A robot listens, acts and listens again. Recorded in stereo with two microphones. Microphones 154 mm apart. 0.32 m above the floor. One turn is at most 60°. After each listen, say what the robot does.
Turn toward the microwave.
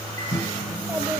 Turn 20° left.
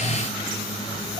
Keep listening.
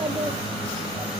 Keep listening.
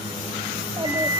Turn 60° left.
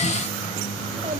Turn 60° left.
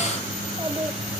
Turn 20° left.
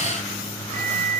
Turn 20° left.
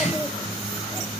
Keep listening.
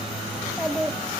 Keep listening.
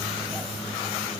I heard a microwave from this way, but can't make it out now.